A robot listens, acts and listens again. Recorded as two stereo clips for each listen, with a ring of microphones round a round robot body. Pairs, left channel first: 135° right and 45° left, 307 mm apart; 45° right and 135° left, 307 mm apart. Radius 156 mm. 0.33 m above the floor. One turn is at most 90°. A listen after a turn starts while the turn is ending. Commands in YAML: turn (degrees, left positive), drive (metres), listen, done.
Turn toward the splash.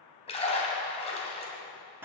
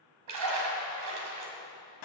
turn: 90
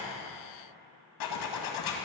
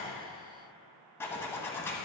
turn: 65
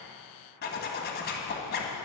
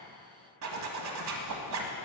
done: "I heard a splash from this way, but can't make it out now."